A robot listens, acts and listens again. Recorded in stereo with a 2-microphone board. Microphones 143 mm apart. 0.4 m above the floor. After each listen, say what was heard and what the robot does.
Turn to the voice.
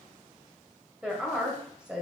Turn 30° right.
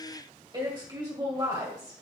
So it is at 140° right. Turn 140° right.
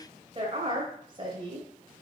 The woman speaking is now 50° right. Turn 50° right.
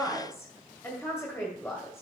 The woman speaking is now 20° left. Turn 20° left.
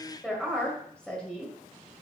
The woman speaking is now 10° left. Turn 10° left.
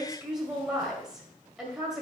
Found it: a woman speaking, straight ahead, 1 to 2 m away.